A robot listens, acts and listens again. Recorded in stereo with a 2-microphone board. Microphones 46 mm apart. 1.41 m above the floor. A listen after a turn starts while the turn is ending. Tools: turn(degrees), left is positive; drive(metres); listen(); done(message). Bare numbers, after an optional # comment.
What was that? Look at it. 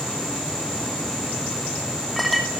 turn(30)
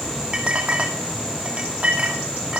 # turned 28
# So it is at 25° right.
turn(-25)
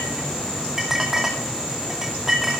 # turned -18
# The clink is now 10° right.
turn(-10)
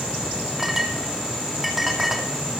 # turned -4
done("Facing the clink, 2 to 4 m away.")